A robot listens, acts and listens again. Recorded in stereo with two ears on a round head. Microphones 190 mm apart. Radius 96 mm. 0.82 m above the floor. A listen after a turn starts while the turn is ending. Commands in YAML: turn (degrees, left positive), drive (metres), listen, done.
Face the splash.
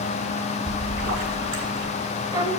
turn: -65
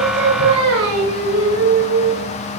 listen: true
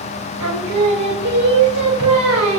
done: "I heard a splash, but can't make it out now. It was about straight ahead or 50° right."